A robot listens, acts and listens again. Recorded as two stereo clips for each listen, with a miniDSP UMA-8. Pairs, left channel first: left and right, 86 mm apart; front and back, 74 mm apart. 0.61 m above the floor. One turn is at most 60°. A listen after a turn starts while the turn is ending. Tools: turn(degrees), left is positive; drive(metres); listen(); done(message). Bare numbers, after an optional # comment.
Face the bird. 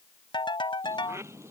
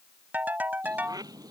# The bird: 150° right.
turn(-60)
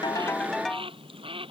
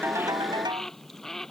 # The bird is now 85° right.
turn(-60)
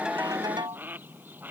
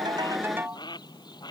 # The bird is now 20° right.
turn(-20)
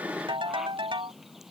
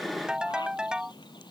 done("Facing the bird.")